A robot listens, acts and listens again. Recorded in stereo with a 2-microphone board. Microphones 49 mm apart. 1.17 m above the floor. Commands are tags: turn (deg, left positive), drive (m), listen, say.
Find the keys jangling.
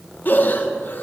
<listen/>
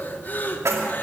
<turn deg="-90"/>
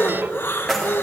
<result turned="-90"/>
<say>Facing the keys jangling.</say>